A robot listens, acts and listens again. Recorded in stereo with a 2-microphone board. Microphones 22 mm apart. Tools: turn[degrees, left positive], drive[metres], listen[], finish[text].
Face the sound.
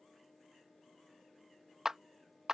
Thought: The clap: about 20° right or 160° right.
Action: turn[-20]
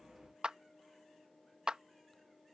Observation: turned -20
Thought: So it is at 140° right.
Action: turn[-140]
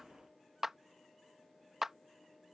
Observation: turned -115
Thought: The clap is now 25° right.
Action: turn[-25]
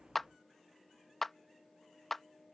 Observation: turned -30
Action: finish[Facing the clap.]